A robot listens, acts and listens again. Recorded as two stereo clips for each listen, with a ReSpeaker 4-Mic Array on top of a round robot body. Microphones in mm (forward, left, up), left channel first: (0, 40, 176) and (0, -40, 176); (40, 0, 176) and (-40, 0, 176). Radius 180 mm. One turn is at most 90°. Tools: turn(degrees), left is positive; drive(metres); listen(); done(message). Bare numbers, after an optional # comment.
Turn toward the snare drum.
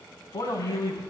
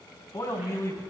listen()
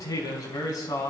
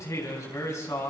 listen()
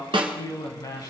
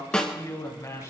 # The snare drum: 80° right.
turn(-80)
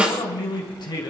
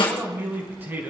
# The snare drum is now 15° right.
turn(-15)
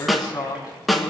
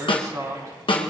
done("Facing the snare drum, 2 to 4 m away.")